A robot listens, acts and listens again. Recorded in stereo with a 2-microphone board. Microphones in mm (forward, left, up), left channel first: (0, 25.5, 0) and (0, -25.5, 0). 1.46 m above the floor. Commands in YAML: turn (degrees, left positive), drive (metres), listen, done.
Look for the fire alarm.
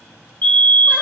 turn: 35
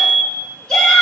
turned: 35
done: "Facing the fire alarm."